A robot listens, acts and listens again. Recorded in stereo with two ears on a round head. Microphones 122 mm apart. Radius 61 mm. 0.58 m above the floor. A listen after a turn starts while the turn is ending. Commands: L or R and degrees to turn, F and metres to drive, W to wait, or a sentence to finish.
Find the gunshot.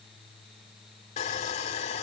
W
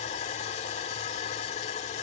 W
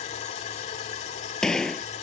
L30
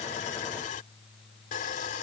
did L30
W
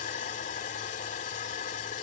I heard a gunshot, but can't make it out now. It was about 25° right or 145° left.